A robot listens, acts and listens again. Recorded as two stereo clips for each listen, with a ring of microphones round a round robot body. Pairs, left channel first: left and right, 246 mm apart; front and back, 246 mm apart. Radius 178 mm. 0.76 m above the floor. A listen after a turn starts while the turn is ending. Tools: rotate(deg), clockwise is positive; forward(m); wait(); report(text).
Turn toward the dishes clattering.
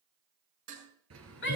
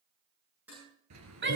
rotate(95)
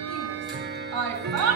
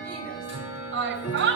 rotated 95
wait()
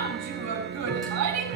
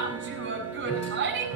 wait()
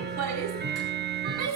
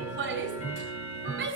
report("Facing where the dishes clattering came from. I can't hear it now.")